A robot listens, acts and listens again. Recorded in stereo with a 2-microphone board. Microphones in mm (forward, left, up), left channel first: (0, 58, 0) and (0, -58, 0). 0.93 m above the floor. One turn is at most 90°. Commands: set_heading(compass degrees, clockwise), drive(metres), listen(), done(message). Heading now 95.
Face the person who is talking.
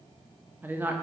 set_heading(110)
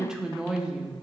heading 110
done("Facing the woman speaking.")